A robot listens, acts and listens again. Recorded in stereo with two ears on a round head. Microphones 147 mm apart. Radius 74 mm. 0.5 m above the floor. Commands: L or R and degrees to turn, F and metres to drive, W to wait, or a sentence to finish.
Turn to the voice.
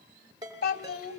L60
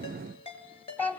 L10
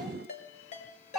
Found it: a child speaking, straight ahead, 2 to 4 m away.